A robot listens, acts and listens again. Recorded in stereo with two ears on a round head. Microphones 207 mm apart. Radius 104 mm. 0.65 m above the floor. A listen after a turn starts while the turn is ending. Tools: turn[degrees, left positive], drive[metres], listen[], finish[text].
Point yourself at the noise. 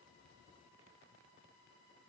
Action: listen[]
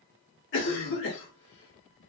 Thought: The cough: about 55° left or 125° left.
Action: turn[55]
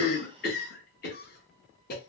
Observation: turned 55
Thought: So it is at 50° left.
Action: turn[50]
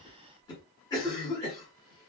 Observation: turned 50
Thought: The cough is now 20° left.
Action: turn[20]
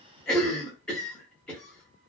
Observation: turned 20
Action: finish[Facing the cough.]